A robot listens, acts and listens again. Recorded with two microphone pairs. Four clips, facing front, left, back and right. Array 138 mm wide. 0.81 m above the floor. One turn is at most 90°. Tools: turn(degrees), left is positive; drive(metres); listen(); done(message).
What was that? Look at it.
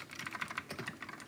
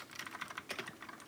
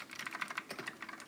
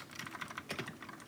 listen()
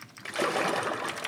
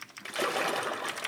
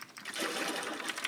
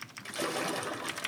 turn(degrees=30)
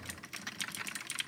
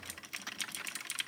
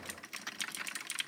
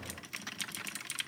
done("Facing where the splash came from. I can't hear it now.")